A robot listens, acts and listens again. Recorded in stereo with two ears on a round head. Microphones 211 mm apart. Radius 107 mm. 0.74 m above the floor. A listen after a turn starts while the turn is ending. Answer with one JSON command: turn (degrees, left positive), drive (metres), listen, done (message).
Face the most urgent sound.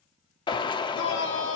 {"turn": 55}
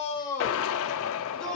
{"done": "Found it: a shout, straight ahead, 2 to 4 m away."}